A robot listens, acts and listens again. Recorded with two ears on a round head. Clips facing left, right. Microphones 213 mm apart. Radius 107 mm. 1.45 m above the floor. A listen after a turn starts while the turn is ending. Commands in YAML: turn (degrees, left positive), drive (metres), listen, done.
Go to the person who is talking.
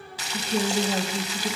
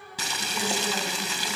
turn: 35
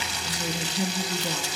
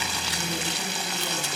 turn: 110
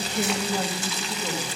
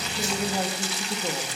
turn: -10
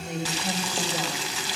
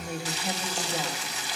drive: 1.0
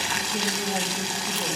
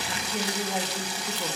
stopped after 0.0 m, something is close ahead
done: "Something is in my way. I am facing the woman speaking but have not reached it."